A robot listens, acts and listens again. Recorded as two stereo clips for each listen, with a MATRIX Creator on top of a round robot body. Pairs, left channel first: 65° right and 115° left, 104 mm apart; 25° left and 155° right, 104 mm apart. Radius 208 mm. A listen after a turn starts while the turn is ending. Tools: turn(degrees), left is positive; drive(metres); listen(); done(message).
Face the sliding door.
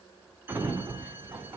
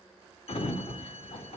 turn(degrees=40)
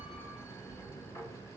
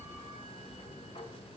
done("Found it: a sliding door, straight ahead, 1 to 2 m away.")